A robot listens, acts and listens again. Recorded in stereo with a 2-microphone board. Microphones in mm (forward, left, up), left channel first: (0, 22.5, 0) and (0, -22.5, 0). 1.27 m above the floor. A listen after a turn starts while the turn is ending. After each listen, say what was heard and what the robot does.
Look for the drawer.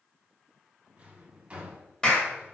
The drawer: about 25° right or 155° right. Turn 25° right.
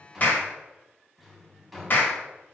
Facing the drawer.